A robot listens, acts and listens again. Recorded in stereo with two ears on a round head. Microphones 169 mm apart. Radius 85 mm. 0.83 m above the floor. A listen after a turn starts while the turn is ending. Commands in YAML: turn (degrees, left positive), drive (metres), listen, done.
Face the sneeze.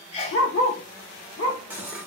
turn: 35
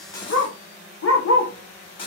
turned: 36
listen: true
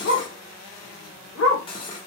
done: "I heard a sneeze, but can't make it out now. It was about 5° right or 110° left."